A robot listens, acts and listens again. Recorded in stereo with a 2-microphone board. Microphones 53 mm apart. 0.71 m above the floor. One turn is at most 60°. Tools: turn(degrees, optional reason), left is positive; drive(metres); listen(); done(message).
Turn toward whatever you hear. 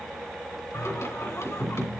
turn(degrees=60)
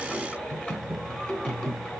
turn(degrees=25, reason="So it is at 25° left.")
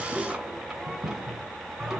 done("Found it: singing, straight ahead, 2 to 4 m away.")